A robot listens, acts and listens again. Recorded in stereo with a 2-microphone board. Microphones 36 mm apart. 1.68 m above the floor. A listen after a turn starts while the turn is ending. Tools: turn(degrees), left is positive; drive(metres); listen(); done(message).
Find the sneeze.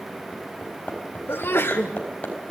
turn(degrees=90)
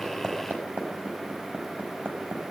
done("I heard a sneeze from this way, but can't make it out now.")